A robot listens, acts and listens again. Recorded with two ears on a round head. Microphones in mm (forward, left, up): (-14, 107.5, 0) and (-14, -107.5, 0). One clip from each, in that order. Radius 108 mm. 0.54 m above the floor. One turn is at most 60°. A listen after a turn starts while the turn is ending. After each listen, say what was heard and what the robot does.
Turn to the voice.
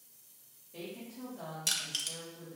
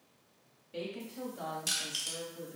The woman speaking: about 50° right or 130° right. Turn 50° right.
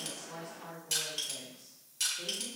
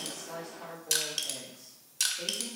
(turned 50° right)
So it is at 10° right. Turn 10° right.
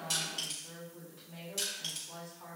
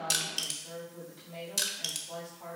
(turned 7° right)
Found it: a woman speaking, straight ahead, 1 to 2 m away.